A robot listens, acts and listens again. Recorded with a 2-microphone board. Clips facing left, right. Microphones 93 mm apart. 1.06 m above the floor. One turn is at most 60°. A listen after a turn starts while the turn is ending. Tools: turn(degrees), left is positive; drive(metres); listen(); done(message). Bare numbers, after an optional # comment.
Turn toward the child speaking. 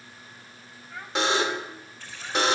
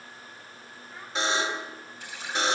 # The child speaking: about 70° left or 110° left.
turn(60)
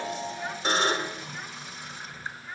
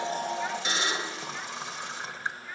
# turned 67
done("Facing the child speaking, over 4 m away.")